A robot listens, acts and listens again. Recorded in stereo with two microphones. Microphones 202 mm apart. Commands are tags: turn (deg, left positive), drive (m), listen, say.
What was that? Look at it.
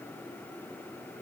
<listen/>
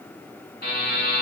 <turn deg="50"/>
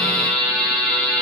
<turn deg="15"/>
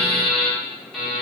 <say>Found it: a buzzer, straight ahead.</say>